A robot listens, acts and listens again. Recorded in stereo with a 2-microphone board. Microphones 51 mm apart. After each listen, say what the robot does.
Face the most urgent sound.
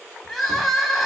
Turn 30° left.
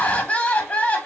Turn 145° left.
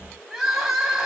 Turn 10° right.
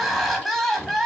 Facing the crying.